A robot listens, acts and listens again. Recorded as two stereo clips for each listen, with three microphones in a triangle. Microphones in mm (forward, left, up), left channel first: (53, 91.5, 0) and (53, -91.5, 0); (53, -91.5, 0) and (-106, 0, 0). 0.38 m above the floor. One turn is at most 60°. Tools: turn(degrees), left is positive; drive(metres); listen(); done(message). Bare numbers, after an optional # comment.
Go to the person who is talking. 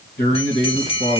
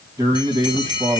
# The man speaking: 80° left.
turn(60)
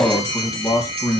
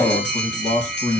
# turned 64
# The man speaking is now 20° left.
turn(20)
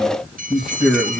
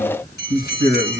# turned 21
drive(1.0)
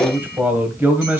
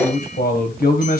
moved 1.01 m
# The man speaking is now 10° right.
turn(-10)
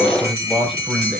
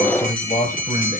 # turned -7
drive(1.0)
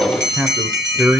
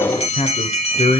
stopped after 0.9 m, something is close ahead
# The man speaking is now 15° right.
turn(-15)
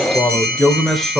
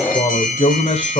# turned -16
done("I am next to the man speaking.")